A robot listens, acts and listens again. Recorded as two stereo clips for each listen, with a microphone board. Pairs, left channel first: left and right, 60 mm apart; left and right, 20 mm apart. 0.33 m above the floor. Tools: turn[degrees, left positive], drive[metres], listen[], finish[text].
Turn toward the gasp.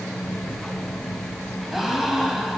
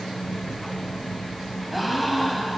Action: turn[-30]
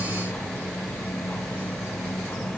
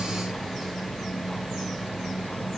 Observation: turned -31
Action: listen[]
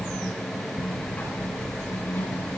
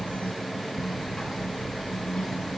Action: finish[I heard a gasp, but can't make it out now. It was about 25° left or 145° right.]